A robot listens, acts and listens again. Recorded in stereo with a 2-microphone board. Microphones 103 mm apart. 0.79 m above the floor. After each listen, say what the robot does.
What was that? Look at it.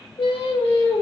Turn 55° left.
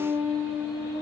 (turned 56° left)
Turn 30° right.
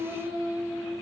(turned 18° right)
Turn 25° right.
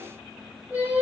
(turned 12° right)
Turn 20° right.
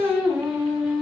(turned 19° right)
Turn 10° right.
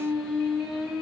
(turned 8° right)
Facing the singing, 2 to 4 m away.